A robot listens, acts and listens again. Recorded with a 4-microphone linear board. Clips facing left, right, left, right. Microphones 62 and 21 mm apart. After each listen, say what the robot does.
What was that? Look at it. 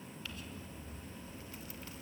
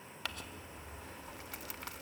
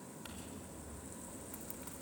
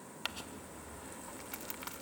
Turn 70° right.
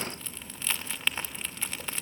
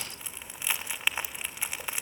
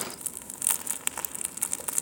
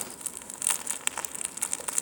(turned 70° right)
Turn 15° right.
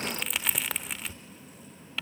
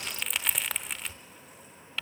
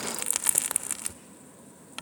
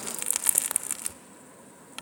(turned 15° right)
Facing the crumpling.